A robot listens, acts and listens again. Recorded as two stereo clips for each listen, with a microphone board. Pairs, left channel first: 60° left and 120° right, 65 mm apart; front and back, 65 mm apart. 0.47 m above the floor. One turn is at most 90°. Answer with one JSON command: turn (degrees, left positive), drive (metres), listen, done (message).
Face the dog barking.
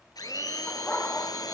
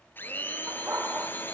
{"turn": 90}
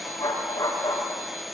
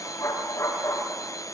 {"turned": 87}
{"turn": 30}
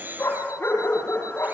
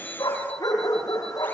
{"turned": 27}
{"done": "Facing the dog barking, over 4 m away."}